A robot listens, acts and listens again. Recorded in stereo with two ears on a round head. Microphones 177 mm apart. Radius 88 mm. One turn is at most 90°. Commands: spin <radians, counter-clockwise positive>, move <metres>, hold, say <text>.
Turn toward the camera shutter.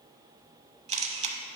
spin -0.61
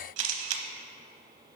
spin -1.57
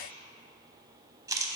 spin -0.35
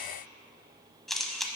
say Facing the camera shutter, under 1 m away.